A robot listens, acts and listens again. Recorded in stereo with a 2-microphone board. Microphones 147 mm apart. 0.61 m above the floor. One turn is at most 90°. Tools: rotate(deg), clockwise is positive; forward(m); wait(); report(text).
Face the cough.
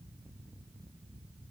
wait()
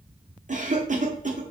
rotate(60)
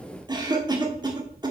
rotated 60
rotate(35)
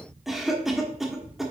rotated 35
report("Found it: a cough, straight ahead.")